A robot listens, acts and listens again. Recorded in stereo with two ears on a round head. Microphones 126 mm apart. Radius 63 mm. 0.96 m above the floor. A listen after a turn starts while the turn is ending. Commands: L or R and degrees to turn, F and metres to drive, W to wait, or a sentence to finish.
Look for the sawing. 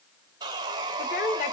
R30
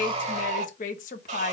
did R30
R115
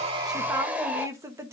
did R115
R10
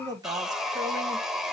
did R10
Found it: sawing, straight ahead, 1 to 2 m away.